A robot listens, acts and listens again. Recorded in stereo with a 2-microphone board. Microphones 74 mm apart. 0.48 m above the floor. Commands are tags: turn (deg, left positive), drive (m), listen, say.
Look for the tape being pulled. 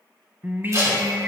<turn deg="-45"/>
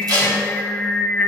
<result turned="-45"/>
<turn deg="-75"/>
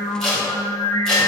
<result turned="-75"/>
<turn deg="10"/>
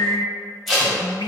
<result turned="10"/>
<say>Facing the tape being pulled, 2 to 4 m away.</say>